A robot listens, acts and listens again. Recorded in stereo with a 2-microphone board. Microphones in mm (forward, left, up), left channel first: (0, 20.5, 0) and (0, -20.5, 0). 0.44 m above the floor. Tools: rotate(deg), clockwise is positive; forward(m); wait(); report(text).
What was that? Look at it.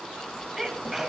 rotate(30)
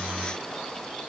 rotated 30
wait()
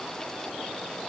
report("I heard a sneeze, but can't make it out now. It was about 20° left or 140° right.")